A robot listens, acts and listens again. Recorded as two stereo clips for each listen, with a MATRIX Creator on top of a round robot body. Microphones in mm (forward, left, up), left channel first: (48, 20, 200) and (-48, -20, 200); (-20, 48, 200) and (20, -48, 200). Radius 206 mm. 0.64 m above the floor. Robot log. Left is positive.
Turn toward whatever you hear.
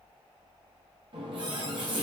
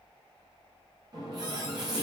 note: The running tap: 115° right.
cmd yaw -115
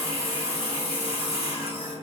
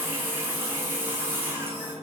end: Facing the running tap, under 1 m away.